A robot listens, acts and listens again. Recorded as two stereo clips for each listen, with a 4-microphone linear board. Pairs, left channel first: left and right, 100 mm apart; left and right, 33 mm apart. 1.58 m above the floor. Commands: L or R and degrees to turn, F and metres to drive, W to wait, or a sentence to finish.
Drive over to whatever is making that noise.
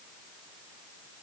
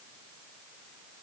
W
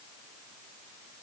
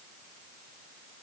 W
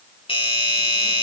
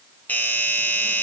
L65
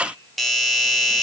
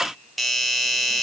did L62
F1.0
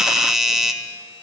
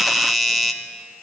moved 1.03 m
F1.0
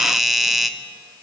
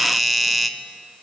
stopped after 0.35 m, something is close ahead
I am next to the doorbell.